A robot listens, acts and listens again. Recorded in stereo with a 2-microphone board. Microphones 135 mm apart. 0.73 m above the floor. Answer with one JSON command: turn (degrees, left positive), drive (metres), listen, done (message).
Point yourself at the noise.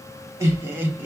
{"turn": -30}
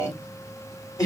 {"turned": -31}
{"turn": 30}
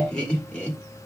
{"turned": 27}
{"turn": 10}
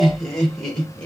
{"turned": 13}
{"done": "Found it: laughter, straight ahead, 2 to 4 m away."}